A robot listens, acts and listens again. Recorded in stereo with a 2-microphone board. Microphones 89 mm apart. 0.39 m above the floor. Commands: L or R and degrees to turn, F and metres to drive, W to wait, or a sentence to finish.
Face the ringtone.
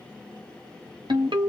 R60
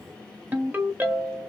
R25
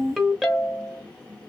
Facing the ringtone, under 1 m away.